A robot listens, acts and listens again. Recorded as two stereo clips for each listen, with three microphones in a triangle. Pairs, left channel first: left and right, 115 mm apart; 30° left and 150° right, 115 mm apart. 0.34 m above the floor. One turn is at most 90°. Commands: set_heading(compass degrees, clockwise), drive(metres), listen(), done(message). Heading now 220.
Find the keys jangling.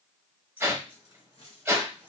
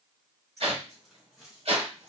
set_heading(130)
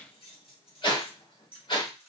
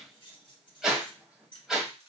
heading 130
set_heading(60)
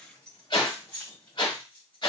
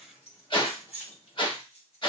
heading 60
set_heading(45)
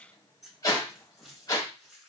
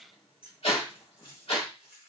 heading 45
done("Facing the keys jangling, 2 to 4 m away.")